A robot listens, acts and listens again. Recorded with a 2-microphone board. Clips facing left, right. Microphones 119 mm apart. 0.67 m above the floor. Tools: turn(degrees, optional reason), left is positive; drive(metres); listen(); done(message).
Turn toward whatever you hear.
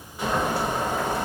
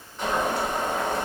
turn(degrees=30)
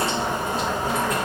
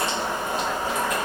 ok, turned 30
turn(degrees=140, reason="So it is at 140° left.")
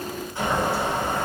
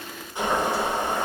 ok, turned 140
turn(degrees=-20, reason="The boiling is now 20° right.")
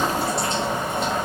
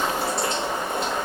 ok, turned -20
done("Facing the boiling.")